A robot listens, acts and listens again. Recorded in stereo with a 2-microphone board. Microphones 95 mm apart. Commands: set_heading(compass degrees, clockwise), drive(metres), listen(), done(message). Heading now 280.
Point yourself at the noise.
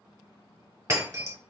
set_heading(315)
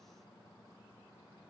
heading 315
listen()
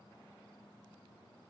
done("I heard breaking glass, but can't make it out now. It was about straight ahead or 110° right.")